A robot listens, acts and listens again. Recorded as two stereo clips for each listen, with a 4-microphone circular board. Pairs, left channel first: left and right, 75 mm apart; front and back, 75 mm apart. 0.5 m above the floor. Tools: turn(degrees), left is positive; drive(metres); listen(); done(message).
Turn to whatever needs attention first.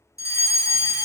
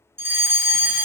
turn(degrees=125)
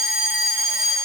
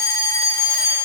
done("Facing the fire alarm.")